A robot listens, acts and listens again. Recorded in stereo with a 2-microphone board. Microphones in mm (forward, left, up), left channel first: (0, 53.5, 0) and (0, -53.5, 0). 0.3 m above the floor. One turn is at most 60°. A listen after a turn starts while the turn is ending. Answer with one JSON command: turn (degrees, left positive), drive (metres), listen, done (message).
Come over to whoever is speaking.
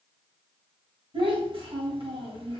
{"turn": -60}
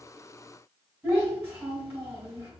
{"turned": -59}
{"turn": -25}
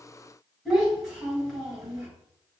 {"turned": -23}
{"drive": 1.0}
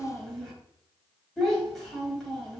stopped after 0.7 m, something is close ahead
{"done": "Arrived at the child speaking, straight ahead."}